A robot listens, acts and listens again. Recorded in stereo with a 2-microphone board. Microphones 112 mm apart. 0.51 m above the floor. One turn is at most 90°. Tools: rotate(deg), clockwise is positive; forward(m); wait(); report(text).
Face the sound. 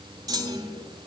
rotate(35)
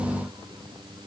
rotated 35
wait()
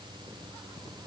report("I heard a clunk, but can't make it out now. It was about straight ahead or 110° right.")